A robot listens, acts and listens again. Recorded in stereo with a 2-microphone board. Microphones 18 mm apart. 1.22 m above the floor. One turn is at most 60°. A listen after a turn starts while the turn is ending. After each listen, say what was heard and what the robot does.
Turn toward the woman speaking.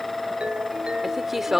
Turn 30° right.
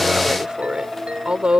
So it is at 125° right. Turn 60° right.
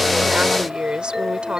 The woman speaking is now 60° right. Turn 60° right.
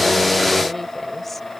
Keep listening.
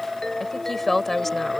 The woman speaking is now 10° left. Turn 10° left.
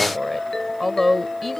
Found it: a woman speaking, straight ahead.